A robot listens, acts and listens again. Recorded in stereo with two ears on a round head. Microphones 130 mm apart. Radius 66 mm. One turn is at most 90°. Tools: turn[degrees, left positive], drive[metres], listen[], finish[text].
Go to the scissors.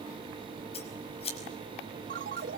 Thought: The scissors: about 45° left or 135° left.
Action: turn[45]
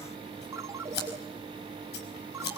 Thought: So it is at 90° left.
Action: turn[90]
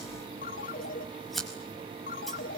Action: drive[1.0]
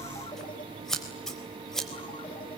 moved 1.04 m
Action: drive[1.0]
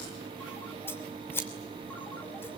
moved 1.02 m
Thought: The scissors is now 15° left.
Action: turn[15]
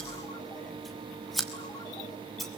Action: drive[1.0]
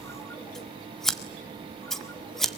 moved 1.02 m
Action: drive[1.0]
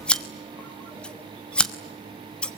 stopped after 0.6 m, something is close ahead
Action: finish[Arrived at the scissors, straight ahead.]